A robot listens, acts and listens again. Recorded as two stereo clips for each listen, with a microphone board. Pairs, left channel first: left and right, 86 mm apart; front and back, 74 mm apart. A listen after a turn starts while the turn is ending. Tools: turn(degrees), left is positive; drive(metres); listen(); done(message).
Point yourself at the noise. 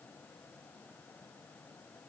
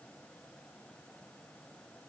listen()
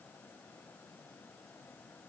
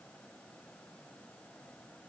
listen()
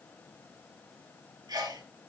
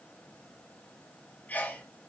turn(degrees=-65)
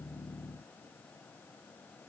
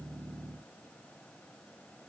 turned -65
done("I heard a sneeze from this way, but can't make it out now.")